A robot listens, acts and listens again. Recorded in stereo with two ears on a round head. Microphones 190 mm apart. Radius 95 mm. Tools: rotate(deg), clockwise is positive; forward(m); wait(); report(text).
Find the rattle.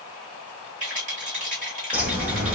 rotate(35)
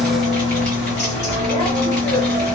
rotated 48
wait()
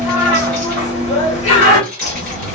report("Facing the rattle, 1 to 2 m away.")